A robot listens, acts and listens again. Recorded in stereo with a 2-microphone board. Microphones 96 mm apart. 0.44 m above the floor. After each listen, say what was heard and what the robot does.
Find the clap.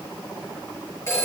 Keep listening.
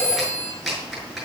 Turn 30° left.
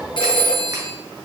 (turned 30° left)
Keep listening.
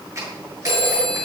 So it is at 30° right. Turn 30° right.
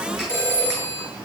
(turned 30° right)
Keep listening.
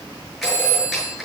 Keep listening.
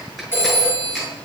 Facing the clap, over 4 m away.